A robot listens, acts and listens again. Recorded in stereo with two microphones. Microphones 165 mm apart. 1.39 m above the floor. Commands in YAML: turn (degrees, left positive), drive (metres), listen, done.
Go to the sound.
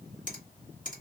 turn: 55
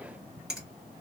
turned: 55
drive: 1.0
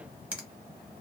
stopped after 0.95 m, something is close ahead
done: "Arrived at the finger snap, straight ahead."